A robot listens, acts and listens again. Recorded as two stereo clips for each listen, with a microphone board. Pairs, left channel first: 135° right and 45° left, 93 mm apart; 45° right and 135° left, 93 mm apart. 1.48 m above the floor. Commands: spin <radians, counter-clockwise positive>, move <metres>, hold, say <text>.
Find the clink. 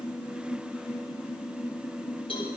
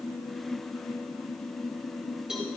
hold
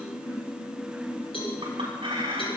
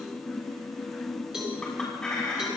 spin 0.61
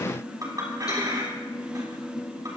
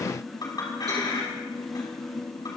say Facing the clink.